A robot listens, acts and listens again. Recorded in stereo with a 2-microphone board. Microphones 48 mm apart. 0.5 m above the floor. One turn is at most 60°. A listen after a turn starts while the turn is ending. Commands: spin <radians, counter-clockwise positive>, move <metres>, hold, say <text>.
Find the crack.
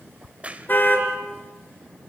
spin -0.44
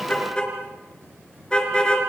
hold
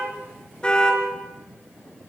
say I heard a crack, but can't make it out now. It was about straight ahead or 130° right.